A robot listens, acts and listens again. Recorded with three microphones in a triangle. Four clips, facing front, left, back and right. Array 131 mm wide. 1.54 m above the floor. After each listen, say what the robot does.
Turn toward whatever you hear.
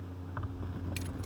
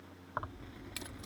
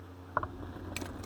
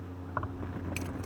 Turn 170° right.
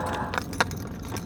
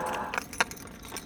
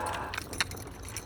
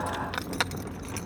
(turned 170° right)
Turn 10° right.
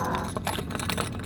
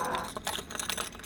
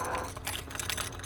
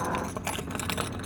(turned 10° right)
Turn 35° right.
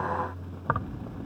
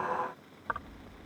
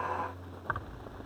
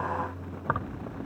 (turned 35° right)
Turn 45° right.
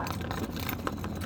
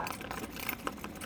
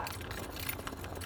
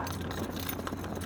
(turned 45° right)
Turn 15° left.
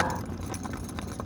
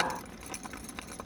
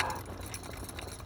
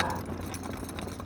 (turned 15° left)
Found it: keys jangling, straight ahead.